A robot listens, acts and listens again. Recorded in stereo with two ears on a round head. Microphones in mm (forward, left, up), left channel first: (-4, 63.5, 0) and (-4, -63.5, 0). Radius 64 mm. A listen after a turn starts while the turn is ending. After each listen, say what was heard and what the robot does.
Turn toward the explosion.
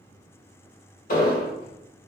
The explosion: about 65° left or 115° left. Turn 65° left.
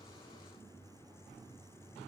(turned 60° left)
Keep listening.
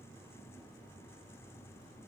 I heard an explosion, but can't make it out now. It was about 5° left or 55° left.